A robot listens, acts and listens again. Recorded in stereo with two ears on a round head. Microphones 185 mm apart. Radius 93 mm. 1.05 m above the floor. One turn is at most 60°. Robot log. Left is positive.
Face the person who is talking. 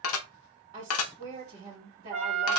note: The woman speaking: about 25° right or 155° right.
cmd yaw -25
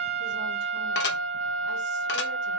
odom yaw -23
cmd idle
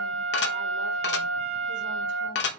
cmd idle
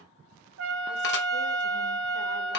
end: I heard a woman speaking, but can't make it out now. It was about 5° right or 130° right.